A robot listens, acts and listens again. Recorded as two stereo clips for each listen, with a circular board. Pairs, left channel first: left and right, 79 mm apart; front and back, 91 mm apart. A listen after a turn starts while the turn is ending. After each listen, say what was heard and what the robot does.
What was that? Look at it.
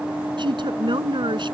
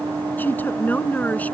The woman speaking: 70° right. Turn 70° right.
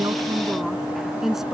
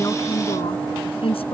Found it: a woman speaking, straight ahead.